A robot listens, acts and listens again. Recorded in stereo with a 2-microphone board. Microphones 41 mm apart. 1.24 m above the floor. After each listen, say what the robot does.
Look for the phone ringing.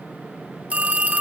Turn 35° right.
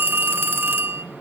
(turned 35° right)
Turn 105° right.
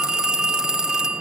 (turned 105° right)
Turn 15° right.
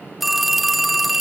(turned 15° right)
Facing the phone ringing.